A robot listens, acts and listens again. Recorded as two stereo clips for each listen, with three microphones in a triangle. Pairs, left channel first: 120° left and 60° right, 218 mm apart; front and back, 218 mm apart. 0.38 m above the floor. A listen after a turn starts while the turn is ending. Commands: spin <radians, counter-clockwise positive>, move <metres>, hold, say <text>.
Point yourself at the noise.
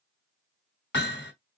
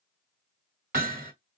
spin 2.44
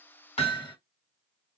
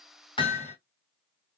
spin 0.96
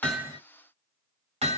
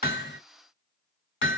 say Found it: hammering, straight ahead, 2 to 4 m away.